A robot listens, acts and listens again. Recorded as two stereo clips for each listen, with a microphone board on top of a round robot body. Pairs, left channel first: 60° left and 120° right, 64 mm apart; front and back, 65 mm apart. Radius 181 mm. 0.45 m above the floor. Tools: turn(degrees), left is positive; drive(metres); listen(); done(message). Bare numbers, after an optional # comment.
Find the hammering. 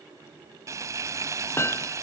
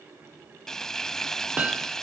# The hammering: 110° left.
turn(110)
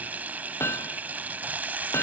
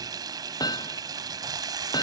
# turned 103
# The hammering is now 10° left.
turn(10)
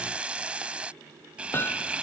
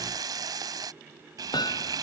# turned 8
done("Found it: hammering, straight ahead.")